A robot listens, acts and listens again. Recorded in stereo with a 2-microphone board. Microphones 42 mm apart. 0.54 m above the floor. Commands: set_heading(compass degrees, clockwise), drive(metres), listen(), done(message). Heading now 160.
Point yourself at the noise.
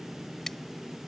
set_heading(130)
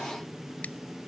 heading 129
listen()
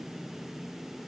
listen()
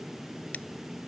done("I heard scissors, but can't make it out now. It was about 20° right or 140° left.")